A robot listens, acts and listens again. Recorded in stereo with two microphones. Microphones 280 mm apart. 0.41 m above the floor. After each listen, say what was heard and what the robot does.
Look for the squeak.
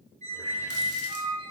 The squeak: about 25° right or 155° right. Turn 25° right.
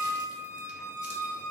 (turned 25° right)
So it is at 125° right. Turn 125° right.
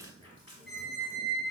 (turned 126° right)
Facing the squeak.